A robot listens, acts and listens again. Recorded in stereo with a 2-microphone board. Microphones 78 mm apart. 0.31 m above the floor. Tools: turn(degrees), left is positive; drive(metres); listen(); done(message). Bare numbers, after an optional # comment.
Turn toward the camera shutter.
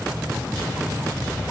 listen()
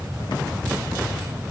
listen()
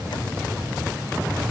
done("I can't make out a camera shutter.")